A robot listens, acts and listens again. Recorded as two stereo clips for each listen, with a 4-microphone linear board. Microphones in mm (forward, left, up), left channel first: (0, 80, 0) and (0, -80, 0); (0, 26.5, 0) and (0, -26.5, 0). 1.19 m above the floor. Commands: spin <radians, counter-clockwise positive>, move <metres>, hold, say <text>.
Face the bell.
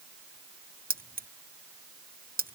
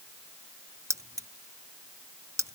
hold
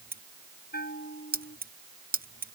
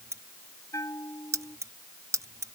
spin 1.31
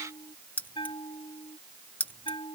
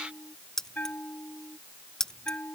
spin 0.52
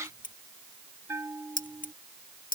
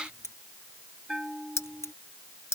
spin -0.26
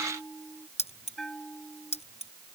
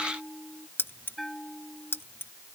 say Found it: a bell, straight ahead.